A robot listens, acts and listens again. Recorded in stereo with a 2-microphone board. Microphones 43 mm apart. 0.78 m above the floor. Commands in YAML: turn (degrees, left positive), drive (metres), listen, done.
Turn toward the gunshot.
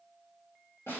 listen: true
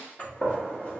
turn: 35
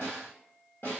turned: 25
listen: true
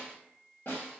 done: "I heard a gunshot, but can't make it out now. It was about 10° left or 120° left."